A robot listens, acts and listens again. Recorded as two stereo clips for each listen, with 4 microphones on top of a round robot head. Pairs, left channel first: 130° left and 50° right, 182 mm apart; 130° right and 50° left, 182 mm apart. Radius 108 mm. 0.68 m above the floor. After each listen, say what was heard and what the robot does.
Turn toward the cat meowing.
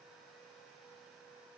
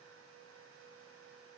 Keep listening.
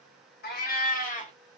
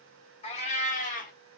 The cat meowing: straight behind. Turn 180° left.
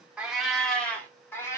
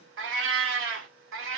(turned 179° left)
The cat meowing is now 55° left. Turn 55° left.
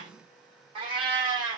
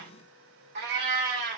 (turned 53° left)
The cat meowing is now 20° left. Turn 20° left.
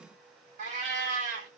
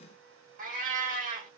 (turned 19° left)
Facing the cat meowing.